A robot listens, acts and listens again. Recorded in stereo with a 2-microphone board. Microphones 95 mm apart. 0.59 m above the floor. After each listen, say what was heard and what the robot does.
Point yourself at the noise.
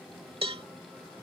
The cowbell: about 75° right or 105° right. Turn 75° right.
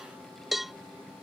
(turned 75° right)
Facing the cowbell.